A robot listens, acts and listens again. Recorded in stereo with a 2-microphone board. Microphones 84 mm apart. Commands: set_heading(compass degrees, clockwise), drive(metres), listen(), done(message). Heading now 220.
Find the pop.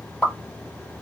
set_heading(190)
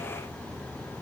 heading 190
listen()
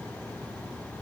done("I heard a pop, but can't make it out now. It was about 25° right or 145° left.")